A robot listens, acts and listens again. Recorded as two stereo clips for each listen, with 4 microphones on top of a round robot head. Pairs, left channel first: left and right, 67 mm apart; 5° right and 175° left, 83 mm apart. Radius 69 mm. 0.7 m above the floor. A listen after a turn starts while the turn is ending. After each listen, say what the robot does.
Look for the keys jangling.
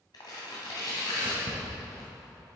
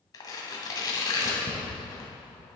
Turn 125° right.
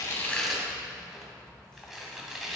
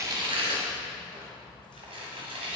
Keep listening.
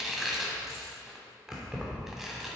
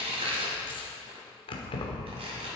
Turn 10° right.
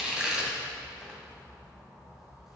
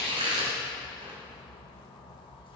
Found it: keys jangling, straight ahead.